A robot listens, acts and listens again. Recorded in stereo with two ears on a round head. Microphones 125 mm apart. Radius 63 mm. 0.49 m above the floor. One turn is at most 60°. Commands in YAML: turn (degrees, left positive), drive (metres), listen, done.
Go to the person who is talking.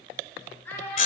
turn: 30
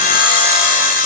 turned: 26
listen: true
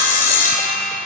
listen: true
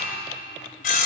done: "I heard a child speaking, but can't make it out now. It was about 15° right or 140° left. I did not reach it."